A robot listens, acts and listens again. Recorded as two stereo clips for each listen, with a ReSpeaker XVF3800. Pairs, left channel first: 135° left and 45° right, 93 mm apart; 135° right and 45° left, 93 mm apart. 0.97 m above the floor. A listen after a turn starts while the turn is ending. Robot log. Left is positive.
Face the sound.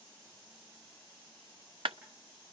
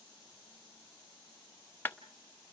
note: The clap: 70° right.
cmd yaw -70
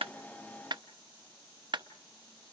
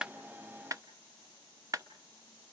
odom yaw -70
note: The clap is now 10° right.
cmd yaw -10
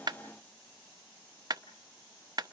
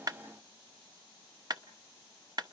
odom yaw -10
end: Facing the clap, under 1 m away.